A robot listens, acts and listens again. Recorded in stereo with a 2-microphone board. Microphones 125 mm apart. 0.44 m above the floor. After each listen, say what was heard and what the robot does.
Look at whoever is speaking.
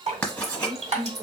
The woman speaking: about 45° right or 135° right. Turn 45° right.
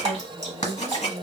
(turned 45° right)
So it is at 25° right. Turn 25° right.
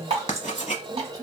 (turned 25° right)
The woman speaking is now 30° right. Turn 30° right.
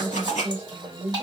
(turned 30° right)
The woman speaking is now 35° right. Turn 35° right.
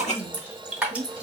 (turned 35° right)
The woman speaking is now 35° right. Turn 35° right.
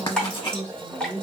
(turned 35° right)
The woman speaking is now 20° right. Turn 20° right.
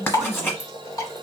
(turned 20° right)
Found it: a woman speaking, straight ahead.